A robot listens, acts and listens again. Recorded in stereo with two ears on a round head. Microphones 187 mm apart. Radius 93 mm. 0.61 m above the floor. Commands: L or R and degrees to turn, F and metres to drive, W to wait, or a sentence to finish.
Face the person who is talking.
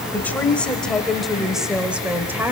R30
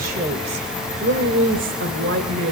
R115
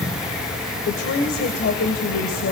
L50
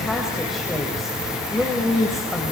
Found it: a woman speaking, straight ahead.